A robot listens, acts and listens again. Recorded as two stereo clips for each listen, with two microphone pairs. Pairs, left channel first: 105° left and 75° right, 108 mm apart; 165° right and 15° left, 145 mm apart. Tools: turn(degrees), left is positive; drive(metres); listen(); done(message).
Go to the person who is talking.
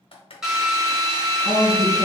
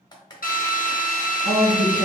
turn(degrees=-20)
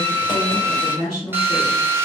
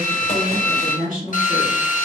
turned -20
drive(metres=1.0)
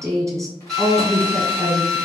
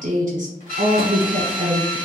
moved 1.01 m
turn(degrees=-15)
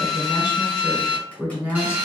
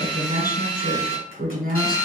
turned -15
drive(metres=1.0)
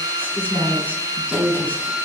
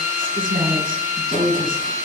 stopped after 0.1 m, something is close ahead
done("Arrived at the woman speaking, straight ahead.")